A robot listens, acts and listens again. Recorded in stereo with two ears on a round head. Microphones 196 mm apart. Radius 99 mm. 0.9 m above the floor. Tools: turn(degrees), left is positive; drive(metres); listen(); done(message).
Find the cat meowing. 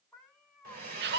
turn(degrees=30)
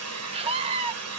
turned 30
listen()
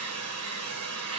listen()
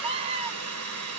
done("I heard a cat meowing, but can't make it out now. It was about 30° right or 150° left.")